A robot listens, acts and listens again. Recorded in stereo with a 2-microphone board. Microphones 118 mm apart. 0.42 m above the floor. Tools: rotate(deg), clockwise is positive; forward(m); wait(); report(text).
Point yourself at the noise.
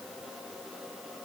wait()
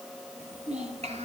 rotate(75)
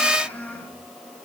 rotate(-15)
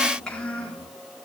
rotate(-10)
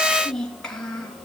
report("Facing the child speaking.")